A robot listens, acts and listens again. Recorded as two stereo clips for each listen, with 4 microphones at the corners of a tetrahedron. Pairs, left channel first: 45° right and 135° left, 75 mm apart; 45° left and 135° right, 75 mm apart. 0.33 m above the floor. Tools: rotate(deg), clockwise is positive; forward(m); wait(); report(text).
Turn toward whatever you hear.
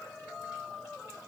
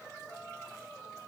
wait()
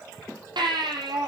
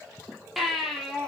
rotate(-135)
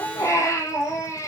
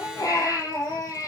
report("Facing the baby crying, over 4 m away.")